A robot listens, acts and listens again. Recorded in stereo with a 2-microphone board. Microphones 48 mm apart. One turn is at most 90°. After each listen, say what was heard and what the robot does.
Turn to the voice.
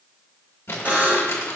Keep listening.
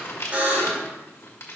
Keep listening.
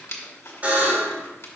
I can't make out anyone speaking to turn to.